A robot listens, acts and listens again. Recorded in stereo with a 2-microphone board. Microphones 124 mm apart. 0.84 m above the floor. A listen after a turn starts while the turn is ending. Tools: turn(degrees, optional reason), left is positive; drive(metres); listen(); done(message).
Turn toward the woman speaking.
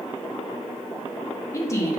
turn(degrees=25, reason="The woman speaking: about 25° left or 155° left.")
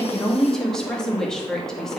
done("Found it: a woman speaking, straight ahead.")